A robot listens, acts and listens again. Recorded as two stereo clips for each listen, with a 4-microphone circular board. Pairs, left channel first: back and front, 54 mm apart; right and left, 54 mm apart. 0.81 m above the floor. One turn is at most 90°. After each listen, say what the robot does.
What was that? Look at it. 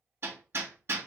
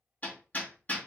Turn 30° right.
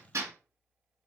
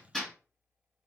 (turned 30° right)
Found it: hammering, straight ahead, 1 to 2 m away.